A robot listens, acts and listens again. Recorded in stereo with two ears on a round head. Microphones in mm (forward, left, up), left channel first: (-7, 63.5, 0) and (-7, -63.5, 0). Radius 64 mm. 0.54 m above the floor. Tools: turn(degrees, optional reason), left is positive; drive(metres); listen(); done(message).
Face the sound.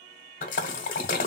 turn(degrees=60, reason="The splash: about 60° left or 120° left.")
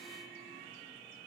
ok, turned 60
listen()
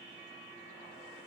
done("I heard a splash, but can't make it out now. It was about straight ahead or 60° left.")